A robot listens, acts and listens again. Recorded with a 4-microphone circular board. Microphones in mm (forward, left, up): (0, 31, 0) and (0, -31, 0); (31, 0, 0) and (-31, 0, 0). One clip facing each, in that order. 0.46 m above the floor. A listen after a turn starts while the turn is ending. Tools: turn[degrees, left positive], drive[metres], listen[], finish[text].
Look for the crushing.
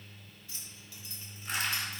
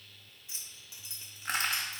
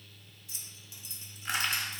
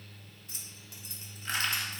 Thought: The crushing: 75° right.
Action: turn[-75]
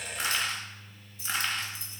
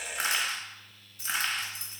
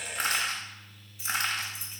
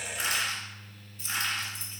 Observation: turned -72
Action: finish[Found it: crushing, straight ahead.]